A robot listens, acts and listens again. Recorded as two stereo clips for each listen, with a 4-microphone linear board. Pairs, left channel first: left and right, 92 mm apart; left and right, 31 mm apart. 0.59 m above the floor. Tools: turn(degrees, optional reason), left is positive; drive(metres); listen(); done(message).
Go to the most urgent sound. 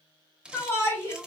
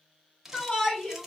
turn(degrees=30, reason="The shout: about 30° left or 150° left.")
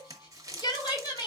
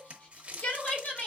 turn(degrees=120, reason="So it is at 120° left.")
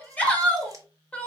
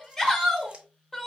turn(degrees=15, reason="The shout is now 15° left.")
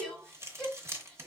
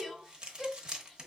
drive(metres=1.0)
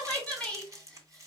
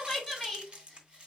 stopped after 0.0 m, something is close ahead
turn(degrees=15, reason="The shout is now 15° left.")
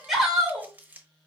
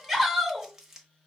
done("Something is in my way. I am facing the shout but have not reached it.")